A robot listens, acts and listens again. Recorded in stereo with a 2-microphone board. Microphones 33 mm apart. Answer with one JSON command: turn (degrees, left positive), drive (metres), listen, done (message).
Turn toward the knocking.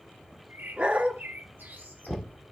{"turn": 30}
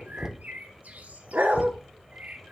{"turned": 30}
{"turn": -15}
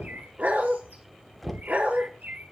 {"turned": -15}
{"done": "Facing the knocking."}